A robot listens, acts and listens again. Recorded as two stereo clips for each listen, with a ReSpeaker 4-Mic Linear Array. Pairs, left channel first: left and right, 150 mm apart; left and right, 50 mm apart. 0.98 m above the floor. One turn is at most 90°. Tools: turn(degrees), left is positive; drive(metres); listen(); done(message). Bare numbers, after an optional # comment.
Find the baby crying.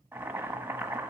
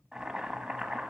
listen()
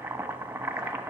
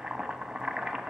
listen()
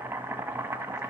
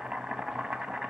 done("I can't make out a baby crying, only boiling.")